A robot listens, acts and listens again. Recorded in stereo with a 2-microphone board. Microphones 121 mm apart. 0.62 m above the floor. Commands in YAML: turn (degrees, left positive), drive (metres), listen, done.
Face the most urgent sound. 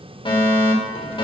turn: 45
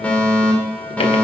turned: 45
turn: 10
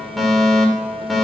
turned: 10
done: "Found it: a fire alarm, straight ahead."